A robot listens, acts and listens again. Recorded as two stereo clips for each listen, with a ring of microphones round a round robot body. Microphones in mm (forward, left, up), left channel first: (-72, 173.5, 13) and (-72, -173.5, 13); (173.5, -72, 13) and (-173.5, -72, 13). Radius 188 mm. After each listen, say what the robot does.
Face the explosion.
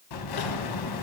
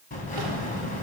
Turn 70° left.
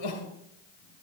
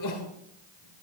Facing where the explosion came from. I can't hear it now.